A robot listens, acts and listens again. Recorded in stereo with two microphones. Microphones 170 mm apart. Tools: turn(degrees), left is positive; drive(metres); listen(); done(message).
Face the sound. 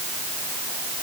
listen()
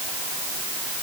listen()
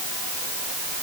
done("I can't make out anything.")